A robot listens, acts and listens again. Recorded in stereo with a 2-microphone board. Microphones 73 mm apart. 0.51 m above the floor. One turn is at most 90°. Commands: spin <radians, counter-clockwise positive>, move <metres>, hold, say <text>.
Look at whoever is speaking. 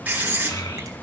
spin 1.22
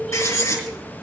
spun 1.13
spin 0.17
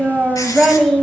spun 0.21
say Facing the child speaking, 1 to 2 m away.